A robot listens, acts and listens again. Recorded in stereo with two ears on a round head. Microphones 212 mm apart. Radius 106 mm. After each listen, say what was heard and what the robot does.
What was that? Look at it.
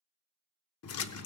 The splash: about 65° left or 115° left. Turn 65° left.
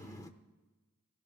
So it is at 15° left. Turn 15° left.
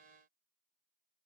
I heard a splash from this way, but can't make it out now.